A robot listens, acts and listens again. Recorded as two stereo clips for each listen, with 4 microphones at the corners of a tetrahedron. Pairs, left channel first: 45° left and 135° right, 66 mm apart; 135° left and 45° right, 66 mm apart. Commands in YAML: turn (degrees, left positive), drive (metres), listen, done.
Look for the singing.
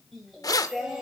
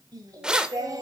turn: -50
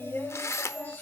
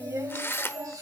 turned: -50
turn: -15
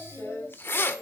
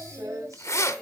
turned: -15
turn: -15
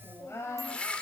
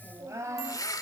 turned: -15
done: "Found it: singing, straight ahead, 2 to 4 m away."